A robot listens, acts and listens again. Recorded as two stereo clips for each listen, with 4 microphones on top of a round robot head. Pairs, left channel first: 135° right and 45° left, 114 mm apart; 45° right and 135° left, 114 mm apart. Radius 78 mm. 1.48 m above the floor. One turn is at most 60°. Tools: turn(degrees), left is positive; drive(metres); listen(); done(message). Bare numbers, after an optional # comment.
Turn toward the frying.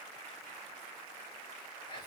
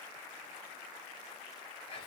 listen()
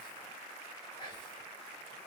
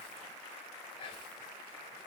listen()
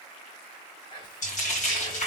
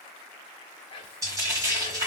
# The frying: 160° right.
turn(-60)
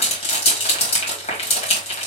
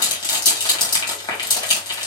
# The frying is now 95° right.
turn(-60)
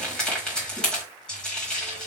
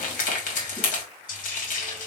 # The frying is now 55° right.
turn(-55)
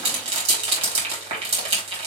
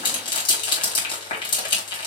done("Facing the frying, 1 to 2 m away.")